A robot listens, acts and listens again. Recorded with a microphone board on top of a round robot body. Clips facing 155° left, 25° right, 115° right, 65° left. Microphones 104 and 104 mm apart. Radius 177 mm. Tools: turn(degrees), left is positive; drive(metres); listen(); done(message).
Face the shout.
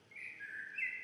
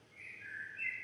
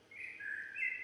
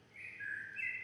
listen()
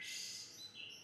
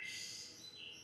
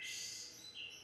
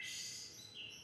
listen()
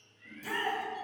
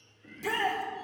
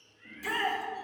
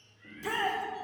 done("Found it: a shout, straight ahead.")